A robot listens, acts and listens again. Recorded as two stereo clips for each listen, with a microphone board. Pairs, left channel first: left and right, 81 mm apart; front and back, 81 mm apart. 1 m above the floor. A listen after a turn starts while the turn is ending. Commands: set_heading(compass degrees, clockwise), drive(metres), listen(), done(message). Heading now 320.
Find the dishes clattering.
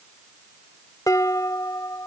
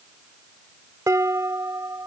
set_heading(185)
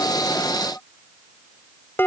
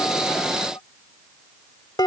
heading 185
set_heading(155)
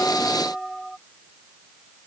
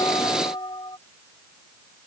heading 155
done("Facing the dishes clattering.")